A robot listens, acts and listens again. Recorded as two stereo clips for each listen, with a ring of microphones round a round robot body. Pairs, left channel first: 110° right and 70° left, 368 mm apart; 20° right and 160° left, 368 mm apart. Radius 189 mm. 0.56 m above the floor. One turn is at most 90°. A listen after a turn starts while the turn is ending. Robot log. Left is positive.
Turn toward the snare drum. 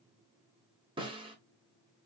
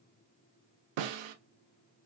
note: The snare drum: 145° left.
cmd yaw +90
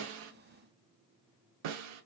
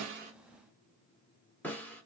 note: The snare drum is now 65° left.
cmd yaw +65
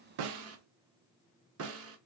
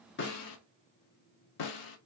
note: The snare drum is now 10° left.
cmd yaw +10
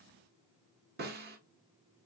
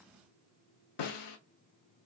end: Facing the snare drum, under 1 m away.